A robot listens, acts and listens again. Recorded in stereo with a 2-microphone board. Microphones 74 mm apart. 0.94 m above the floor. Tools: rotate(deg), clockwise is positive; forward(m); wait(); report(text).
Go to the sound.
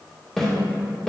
rotate(-30)
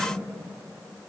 wait()
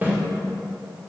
rotate(25)
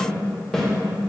forward(1.0)
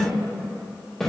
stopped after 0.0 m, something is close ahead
report("Something is in my way. I am facing the snare drum but have not reached it.")